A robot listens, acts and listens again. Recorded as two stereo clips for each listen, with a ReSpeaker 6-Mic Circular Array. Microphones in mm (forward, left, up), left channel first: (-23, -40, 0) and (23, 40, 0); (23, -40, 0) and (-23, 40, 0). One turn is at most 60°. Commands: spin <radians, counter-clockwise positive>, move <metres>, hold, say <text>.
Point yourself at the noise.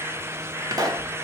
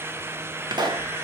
spin 1.05
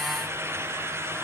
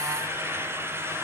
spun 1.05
spin 0.61
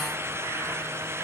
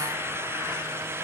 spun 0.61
say Facing where the pop came from. I can't hear it now.